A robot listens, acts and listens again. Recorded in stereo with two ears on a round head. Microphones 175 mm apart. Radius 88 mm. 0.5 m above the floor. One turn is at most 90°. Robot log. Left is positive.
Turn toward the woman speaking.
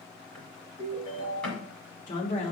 note: The woman speaking: about 35° left or 145° left.
cmd yaw +35
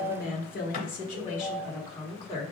note: The woman speaking: about 35° left or 145° left.
cmd yaw +35
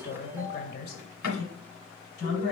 note: So it is at 130° left.
cmd yaw +90
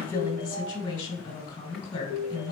note: The woman speaking is now 15° left.
cmd yaw +15
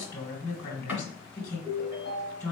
end: Found it: a woman speaking, straight ahead, 1 to 2 m away.